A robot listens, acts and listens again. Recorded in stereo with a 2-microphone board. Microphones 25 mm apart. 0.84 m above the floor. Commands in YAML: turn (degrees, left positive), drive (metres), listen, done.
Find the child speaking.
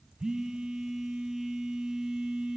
listen: true
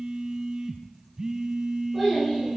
turn: 30
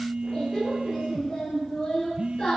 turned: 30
turn: 145
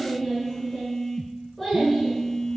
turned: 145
done: "Facing the child speaking, over 4 m away."